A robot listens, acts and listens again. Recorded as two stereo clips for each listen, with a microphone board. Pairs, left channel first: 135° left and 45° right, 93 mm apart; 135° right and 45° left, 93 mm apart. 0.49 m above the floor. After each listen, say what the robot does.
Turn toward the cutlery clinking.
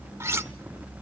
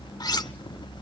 Turn 100° right.
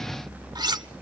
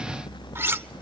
Turn 15° right.
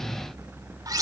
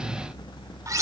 Found it: cutlery clinking, straight ahead.